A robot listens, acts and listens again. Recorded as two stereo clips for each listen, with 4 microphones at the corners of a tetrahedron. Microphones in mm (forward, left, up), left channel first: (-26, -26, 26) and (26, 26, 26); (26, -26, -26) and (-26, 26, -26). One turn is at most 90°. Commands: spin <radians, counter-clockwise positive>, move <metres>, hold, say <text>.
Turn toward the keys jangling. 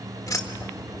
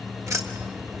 spin 1.57
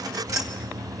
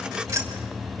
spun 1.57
spin 1.48
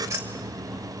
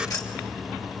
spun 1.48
say Facing the keys jangling, 2 to 4 m away.